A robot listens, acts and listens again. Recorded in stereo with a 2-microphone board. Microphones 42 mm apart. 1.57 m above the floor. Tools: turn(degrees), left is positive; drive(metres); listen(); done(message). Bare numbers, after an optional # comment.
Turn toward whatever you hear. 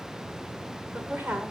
# The woman speaking: about 55° right or 125° right.
turn(-55)
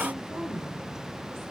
# So it is at 75° right.
turn(-75)
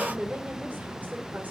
# The woman speaking is now 40° right.
turn(-40)
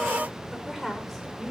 done("Facing the woman speaking.")